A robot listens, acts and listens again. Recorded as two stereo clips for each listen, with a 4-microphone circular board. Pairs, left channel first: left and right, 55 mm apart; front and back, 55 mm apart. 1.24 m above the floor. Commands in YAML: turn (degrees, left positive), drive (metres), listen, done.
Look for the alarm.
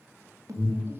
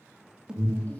turn: -105
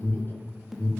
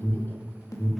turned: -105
done: "Facing the alarm."